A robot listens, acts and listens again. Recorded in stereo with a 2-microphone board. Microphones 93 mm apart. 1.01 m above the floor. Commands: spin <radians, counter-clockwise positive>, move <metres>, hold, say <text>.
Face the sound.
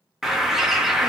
spin -0.52
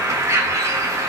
spin -2.53
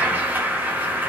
spin -0.35
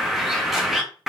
say Facing the bird.